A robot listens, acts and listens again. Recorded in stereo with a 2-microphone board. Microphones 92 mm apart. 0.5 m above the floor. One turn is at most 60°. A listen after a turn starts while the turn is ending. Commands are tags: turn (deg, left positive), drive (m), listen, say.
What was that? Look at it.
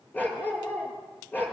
<turn deg="20"/>
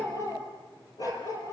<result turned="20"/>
<turn deg="60"/>
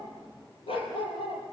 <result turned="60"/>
<turn deg="60"/>
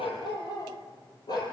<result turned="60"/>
<turn deg="50"/>
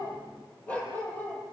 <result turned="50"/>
<turn deg="15"/>
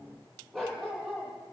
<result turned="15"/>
<say>Found it: a dog barking, straight ahead.</say>